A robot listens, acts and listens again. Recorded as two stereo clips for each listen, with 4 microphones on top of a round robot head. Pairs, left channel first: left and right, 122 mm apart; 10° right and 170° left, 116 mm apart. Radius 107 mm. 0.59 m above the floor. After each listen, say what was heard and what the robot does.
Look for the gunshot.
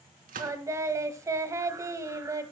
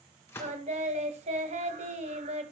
The gunshot: 80° right. Turn 80° right.
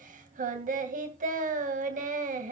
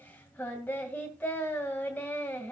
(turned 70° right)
Nothing new. It was at 10° right. Turn 10° right.
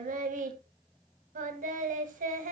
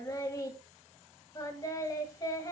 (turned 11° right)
I heard a gunshot from this way, but can't make it out now.